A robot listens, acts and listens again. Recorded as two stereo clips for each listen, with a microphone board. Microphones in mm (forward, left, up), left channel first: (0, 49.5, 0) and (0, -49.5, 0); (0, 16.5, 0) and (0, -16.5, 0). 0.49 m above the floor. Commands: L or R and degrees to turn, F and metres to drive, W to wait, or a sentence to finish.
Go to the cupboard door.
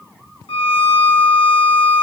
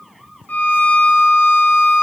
W
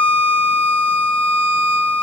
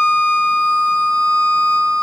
W
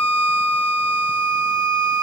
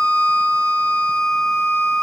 I can't make out a cupboard door to turn to.